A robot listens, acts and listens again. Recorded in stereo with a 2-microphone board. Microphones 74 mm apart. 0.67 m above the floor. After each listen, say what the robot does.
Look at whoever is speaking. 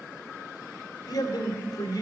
Turn 65° left.
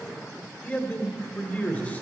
Turn 25° left.
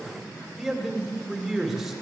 Found it: a man speaking, straight ahead.